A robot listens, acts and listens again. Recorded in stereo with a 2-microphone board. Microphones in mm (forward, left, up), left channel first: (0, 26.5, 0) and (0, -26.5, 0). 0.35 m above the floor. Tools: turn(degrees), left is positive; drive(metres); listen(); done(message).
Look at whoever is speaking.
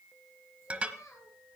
turn(degrees=75)
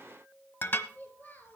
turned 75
turn(degrees=35)
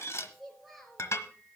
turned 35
done("Found it: a child speaking, straight ahead, 2 to 4 m away.")